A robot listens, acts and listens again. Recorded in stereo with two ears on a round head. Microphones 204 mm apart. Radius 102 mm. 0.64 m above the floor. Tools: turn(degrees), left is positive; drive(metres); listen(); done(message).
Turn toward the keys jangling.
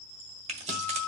turn(degrees=-30)
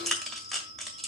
done("Found it: keys jangling, straight ahead, 1 to 2 m away.")